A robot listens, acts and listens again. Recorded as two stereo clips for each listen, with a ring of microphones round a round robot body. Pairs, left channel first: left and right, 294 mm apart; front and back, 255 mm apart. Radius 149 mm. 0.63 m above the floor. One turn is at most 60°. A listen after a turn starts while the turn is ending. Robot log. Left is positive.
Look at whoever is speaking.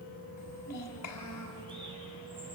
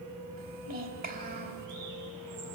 note: The child speaking: 125° left.
cmd yaw +60
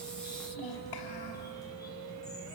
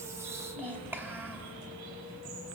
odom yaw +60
note: The child speaking is now 95° left.
cmd yaw +60
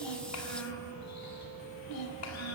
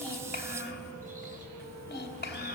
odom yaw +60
note: The child speaking is now 50° left.
cmd yaw +50
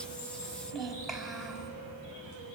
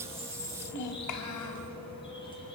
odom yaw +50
end: Found it: a child speaking, straight ahead.